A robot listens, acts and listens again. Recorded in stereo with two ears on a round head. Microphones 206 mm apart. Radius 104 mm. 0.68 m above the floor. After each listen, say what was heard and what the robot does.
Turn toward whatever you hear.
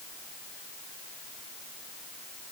Keep listening.
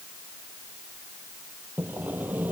Turn 30° right.
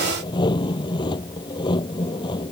So it is at 20° left. Turn 20° left.
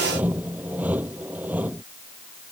Facing the sawing.